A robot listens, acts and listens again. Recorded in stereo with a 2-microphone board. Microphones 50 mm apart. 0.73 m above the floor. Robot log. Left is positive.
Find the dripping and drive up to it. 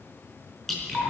cmd yaw +30
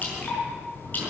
note: So it is at 145° left.
cmd yaw +145
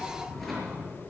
cmd idle
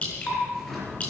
note: The dripping is now 25° left.
cmd yaw +25
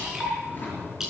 note: The dripping is now 10° right.
cmd yaw -10
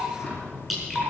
cmd fwd 1.0
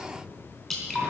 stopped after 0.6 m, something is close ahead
end: Something is in my way. I am facing the dripping but have not reached it.